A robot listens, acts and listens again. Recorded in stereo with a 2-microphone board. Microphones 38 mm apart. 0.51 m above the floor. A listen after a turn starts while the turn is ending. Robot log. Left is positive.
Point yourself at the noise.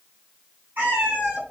note: The cat meowing: about 55° right or 125° right.
cmd yaw -55
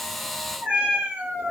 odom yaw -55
note: So it is at 70° right.
cmd yaw -70
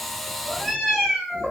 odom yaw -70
note: The cat meowing is now 10° right.
cmd yaw -10
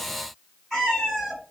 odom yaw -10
end: Facing the cat meowing.